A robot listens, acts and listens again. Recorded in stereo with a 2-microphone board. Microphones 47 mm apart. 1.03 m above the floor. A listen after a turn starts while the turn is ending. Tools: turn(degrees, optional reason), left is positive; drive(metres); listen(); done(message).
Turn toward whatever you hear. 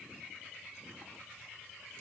listen()
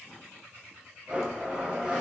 turn(degrees=-20, reason="The blender: about 20° right or 160° right.")
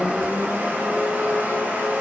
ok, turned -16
turn(degrees=-140, reason="So it is at 140° right.")
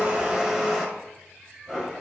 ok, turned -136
done("Found it: a blender, straight ahead, 1 to 2 m away.")